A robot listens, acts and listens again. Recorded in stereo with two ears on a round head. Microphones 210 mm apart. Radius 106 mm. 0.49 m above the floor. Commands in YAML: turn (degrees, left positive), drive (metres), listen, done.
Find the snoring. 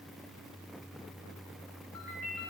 listen: true
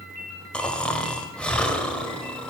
turn: 30
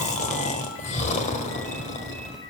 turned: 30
turn: 145
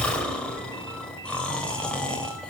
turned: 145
done: "Facing the snoring."